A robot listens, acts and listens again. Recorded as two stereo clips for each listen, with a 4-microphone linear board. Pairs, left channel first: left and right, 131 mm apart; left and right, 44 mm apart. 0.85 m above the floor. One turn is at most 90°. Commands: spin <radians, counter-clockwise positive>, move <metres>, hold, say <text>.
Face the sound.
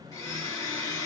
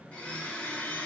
spin 0.44
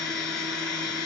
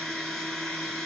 spin 0.17
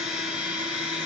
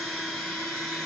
say Facing the blender.